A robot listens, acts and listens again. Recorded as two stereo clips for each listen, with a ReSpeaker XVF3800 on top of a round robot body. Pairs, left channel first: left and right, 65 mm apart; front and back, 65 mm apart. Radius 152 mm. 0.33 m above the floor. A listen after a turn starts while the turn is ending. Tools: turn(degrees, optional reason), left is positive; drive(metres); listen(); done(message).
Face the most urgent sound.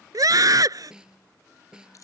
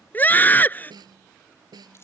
turn(degrees=-65, reason="The scream: 65° right.")
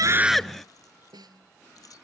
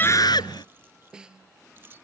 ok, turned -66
listen()
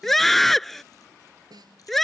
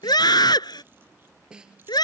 done("Found it: a scream, straight ahead.")